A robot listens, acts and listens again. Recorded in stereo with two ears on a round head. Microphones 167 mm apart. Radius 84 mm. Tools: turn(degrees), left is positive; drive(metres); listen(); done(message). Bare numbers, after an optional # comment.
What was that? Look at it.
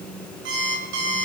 # The alarm clock: about 70° right or 110° right.
turn(-70)
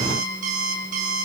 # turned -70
# So it is at 40° right.
turn(-40)
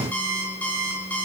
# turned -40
# The alarm clock is now 10° left.
turn(10)
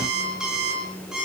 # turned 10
done("Found it: an alarm clock, straight ahead.")